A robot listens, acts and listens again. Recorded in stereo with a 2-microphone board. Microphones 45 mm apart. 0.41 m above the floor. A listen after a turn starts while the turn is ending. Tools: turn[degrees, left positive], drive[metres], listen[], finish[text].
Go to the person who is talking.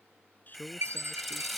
Thought: The man speaking: about 40° left or 140° left.
Action: turn[40]
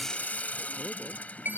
Action: listen[]
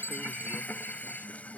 Action: listen[]
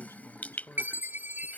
Thought: So it is at 100° left.
Action: turn[100]
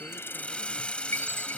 Action: listen[]
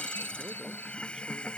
Action: listen[]
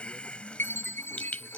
Action: finish[Facing where the man speaking came from. I can't hear it now. I did not reach it.]